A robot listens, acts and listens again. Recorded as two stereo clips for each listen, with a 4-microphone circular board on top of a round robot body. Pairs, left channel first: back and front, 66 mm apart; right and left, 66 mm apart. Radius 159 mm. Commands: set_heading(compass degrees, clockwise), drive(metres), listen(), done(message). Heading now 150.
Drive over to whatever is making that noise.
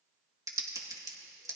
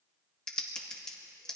set_heading(165)
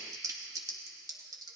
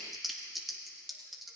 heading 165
drive(1.0)
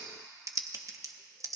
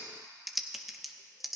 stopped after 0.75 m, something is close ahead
done("Arrived at the typing on a keyboard, straight ahead.")